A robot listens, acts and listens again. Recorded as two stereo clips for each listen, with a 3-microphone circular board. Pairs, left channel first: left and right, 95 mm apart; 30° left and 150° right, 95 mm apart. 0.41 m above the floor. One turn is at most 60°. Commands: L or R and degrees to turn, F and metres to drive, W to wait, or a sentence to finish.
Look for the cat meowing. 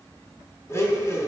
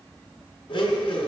W
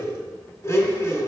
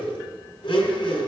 W
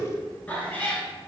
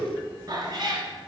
L60
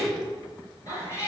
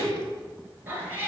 L60
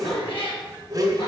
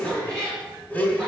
L60
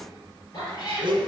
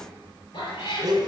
L40
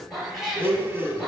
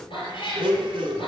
Facing the cat meowing, 2 to 4 m away.